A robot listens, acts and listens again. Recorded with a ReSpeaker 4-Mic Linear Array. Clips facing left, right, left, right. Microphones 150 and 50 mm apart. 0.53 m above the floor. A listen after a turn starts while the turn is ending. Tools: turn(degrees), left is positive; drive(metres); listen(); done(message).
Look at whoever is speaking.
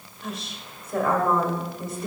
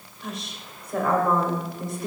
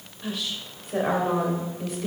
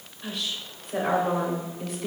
turn(degrees=30)
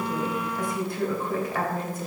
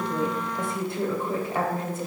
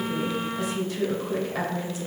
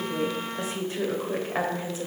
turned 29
turn(degrees=-30)
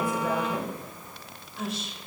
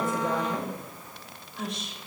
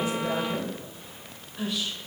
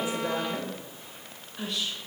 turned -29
done("Facing the woman speaking.")